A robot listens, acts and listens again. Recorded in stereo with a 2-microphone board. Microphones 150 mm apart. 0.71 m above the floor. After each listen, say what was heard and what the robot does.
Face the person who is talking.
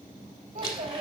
Turn 90° right.
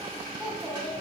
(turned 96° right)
Facing the child speaking.